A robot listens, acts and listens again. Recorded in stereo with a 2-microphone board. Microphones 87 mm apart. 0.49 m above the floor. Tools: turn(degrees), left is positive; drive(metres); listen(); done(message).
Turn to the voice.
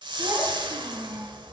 turn(degrees=-40)
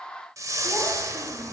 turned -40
listen()
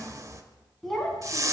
done("Facing the child speaking, 2 to 4 m away.")